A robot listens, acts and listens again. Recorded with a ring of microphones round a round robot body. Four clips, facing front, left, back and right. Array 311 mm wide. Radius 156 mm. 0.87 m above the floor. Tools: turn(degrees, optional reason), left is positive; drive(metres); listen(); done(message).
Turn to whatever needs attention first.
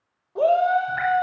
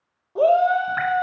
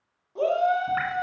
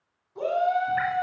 turn(degrees=70, reason="The shout: 70° left.")
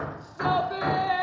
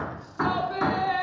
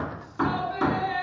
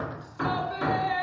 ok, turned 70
turn(degrees=35, reason="The shout is now 35° left.")
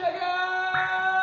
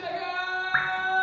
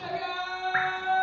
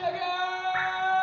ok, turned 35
turn(degrees=-15, reason="The shout is now 15° right.")
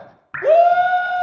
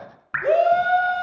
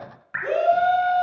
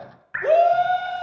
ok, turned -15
done("Facing the shout.")